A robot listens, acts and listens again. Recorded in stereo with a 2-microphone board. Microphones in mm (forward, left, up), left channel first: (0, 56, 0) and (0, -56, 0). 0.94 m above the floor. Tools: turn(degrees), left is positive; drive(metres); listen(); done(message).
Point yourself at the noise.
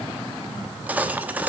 turn(degrees=-30)
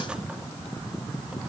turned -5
listen()
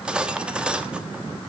turn(degrees=-30)
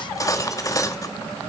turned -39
turn(degrees=30)
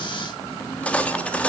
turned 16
turn(degrees=10)
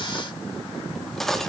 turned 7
done("Facing the cutlery clinking.")